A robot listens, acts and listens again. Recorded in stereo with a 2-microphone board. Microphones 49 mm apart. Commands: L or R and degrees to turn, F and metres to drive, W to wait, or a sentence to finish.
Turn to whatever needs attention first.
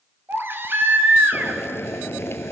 R50
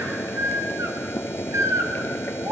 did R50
R80
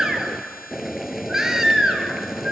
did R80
R10
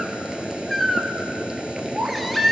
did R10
Found it: a baby crying, straight ahead, 1 to 2 m away.